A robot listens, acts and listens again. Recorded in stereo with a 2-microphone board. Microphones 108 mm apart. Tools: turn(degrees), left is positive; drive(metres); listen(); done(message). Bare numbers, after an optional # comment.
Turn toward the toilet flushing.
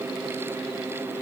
listen()
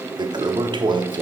# The toilet flushing: about 45° right or 135° right.
turn(-45)
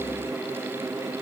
listen()
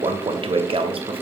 # So it is at 80° right.
turn(-80)
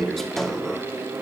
done("Facing the toilet flushing.")